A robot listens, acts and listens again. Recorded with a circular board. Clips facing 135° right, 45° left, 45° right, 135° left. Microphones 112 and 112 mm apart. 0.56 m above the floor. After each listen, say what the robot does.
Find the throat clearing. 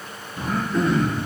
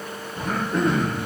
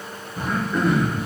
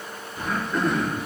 Turn 35° left.
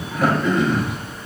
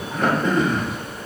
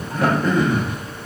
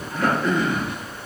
Facing the throat clearing.